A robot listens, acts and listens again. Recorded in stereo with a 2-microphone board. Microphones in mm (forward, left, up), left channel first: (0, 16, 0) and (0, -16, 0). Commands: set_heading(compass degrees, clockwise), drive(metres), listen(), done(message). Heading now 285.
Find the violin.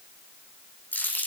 listen()
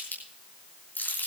listen()
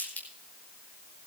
done("I can't make out a violin to turn to.")